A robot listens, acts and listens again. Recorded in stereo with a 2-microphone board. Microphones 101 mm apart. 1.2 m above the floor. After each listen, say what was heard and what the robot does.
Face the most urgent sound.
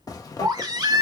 The baby crying: about 40° right or 140° right. Turn 40° right.
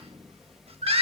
So it is at 100° right. Turn 100° right.
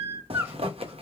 The baby crying is now 25° right. Turn 25° right.
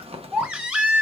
The baby crying is now 10° right. Turn 10° right.
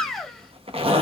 Found it: a baby crying, straight ahead.